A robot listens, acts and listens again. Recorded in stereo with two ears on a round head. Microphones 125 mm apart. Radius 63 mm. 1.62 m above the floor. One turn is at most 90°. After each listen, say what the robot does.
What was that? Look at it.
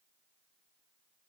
Keep listening.
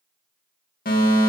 Turn 70° left.
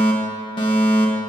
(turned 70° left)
Turn 35° left.
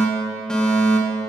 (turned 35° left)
Found it: a fire alarm, straight ahead, 2 to 4 m away.